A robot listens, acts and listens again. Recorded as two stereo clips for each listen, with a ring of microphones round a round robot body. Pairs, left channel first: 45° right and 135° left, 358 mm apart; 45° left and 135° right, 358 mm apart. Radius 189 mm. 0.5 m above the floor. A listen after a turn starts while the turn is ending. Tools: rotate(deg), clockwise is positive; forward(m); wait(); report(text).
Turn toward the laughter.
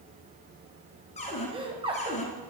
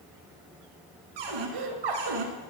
rotate(150)
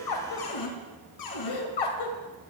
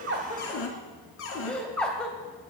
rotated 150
rotate(40)
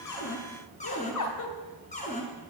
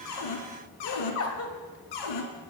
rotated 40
report("Facing the laughter.")